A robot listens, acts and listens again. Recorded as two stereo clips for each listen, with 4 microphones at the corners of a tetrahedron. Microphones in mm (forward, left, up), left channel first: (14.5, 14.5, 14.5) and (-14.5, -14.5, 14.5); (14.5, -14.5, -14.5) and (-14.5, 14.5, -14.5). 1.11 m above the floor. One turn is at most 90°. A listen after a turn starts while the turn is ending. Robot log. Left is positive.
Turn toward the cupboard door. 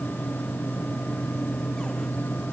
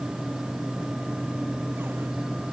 cmd idle
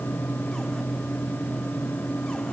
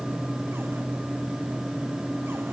cmd idle
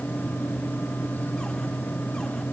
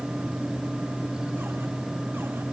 end: I can't make out a cupboard door.